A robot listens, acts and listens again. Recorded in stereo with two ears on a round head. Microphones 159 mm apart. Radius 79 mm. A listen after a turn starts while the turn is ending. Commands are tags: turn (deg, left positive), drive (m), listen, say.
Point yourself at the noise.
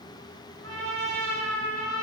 <turn deg="-90"/>
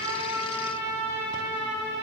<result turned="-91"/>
<turn deg="10"/>
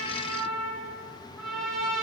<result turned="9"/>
<say>Facing the trumpet.</say>